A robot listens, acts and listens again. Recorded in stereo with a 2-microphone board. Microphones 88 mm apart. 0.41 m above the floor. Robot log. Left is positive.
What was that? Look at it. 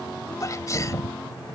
note: The sneeze: about 40° left or 140° left.
cmd yaw +40
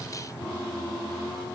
cmd idle
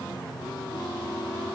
end: I heard a sneeze, but can't make it out now. It was about straight ahead or 100° left.